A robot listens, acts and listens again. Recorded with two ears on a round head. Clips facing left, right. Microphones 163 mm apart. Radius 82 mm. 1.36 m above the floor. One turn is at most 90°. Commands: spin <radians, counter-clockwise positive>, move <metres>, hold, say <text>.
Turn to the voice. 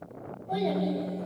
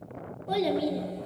spin -1.57
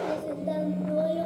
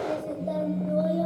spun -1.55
say Found it: a child speaking, straight ahead.